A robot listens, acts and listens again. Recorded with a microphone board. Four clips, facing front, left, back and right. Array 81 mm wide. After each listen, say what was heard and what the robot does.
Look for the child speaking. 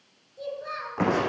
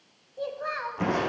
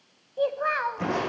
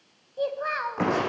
The child speaking: 165° right. Turn 165° right.
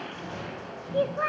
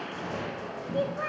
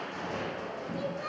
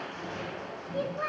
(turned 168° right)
Facing the child speaking, 1 to 2 m away.